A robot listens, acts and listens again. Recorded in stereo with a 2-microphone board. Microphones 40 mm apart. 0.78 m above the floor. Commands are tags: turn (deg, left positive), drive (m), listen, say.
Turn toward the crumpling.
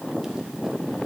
<listen/>
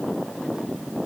<listen/>
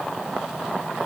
<say>I can't make out crumpling.</say>